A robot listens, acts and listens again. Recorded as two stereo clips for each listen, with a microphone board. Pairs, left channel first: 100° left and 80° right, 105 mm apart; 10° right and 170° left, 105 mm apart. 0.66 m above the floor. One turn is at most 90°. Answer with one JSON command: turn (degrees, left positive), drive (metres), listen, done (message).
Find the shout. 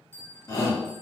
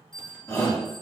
{"turn": 50}
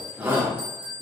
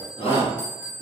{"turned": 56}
{"turn": -10}
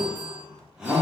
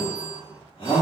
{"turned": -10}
{"done": "Found it: a shout, straight ahead."}